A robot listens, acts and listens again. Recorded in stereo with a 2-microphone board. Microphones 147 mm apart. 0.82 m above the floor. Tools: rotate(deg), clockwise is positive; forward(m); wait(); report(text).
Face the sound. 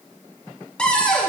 rotate(-30)
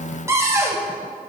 rotate(20)
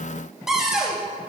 report("Found it: a cupboard door, straight ahead, 1 to 2 m away.")